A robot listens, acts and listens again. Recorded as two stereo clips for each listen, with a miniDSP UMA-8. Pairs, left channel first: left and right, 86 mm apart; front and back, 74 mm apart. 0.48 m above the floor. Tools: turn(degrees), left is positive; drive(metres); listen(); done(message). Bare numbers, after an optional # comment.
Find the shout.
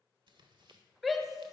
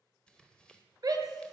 # The shout: straight behind.
turn(180)
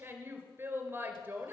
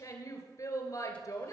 # The shout is now 30° right.
turn(-30)
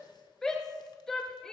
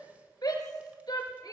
# The shout is now 10° left.
turn(10)
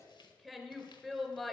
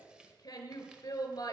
done("Facing the shout, 2 to 4 m away.")